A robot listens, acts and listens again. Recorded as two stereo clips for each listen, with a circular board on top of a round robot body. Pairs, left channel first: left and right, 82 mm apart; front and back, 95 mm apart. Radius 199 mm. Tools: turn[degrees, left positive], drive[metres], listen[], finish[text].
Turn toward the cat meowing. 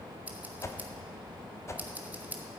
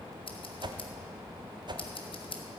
Action: listen[]
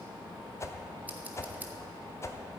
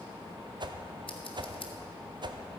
Action: listen[]
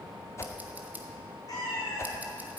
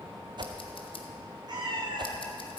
Thought: The cat meowing: 140° left.
Action: turn[140]
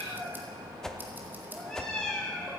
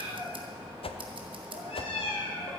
Thought: The cat meowing is now 10° left.
Action: turn[10]
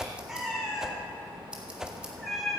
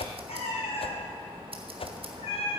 Action: finish[Found it: a cat meowing, straight ahead, 2 to 4 m away.]